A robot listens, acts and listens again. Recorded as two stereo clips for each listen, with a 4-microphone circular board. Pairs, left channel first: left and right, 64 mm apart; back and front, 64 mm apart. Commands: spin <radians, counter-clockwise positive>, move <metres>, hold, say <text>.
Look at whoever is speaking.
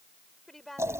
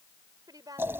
say Facing the woman speaking.